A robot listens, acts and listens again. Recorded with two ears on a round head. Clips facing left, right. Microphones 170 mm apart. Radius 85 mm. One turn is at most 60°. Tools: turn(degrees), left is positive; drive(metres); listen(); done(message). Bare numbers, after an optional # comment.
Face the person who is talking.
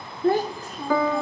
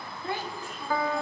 # The child speaking: about 35° left or 145° left.
turn(35)
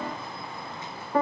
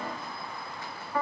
listen()
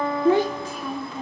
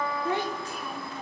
# So it is at 110° left.
turn(60)
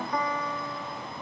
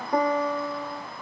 # Nothing new. It was at 50° left.
turn(50)
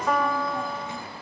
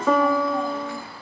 listen()
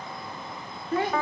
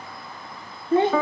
# The child speaking is now 25° right.
turn(-25)
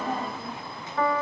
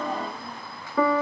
listen()
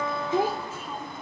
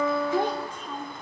done("Found it: a child speaking, straight ahead.")